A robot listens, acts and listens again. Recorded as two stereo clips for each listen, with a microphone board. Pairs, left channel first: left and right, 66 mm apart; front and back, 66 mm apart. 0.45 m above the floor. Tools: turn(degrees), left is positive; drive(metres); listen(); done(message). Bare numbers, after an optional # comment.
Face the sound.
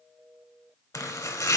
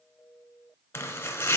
# The chopping: 50° left.
turn(50)
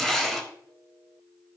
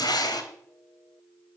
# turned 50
done("Facing the chopping.")